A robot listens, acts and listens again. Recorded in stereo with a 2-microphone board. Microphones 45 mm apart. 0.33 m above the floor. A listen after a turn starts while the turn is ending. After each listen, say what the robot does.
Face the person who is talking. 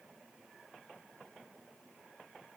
Keep listening.
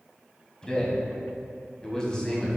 Turn 20° left.
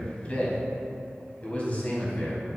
Turn 140° left.
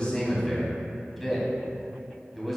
Found it: a man speaking, straight ahead, 1 to 2 m away.